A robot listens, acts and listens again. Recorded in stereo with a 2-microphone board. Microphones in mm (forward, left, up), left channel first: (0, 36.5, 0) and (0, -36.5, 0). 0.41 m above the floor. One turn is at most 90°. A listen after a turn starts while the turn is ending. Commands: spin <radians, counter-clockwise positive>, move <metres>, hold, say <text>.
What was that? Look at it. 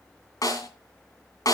spin 0.96
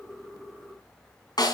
spin 1.22
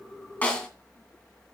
spin 0.17
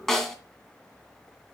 say Found it: a snare drum, straight ahead.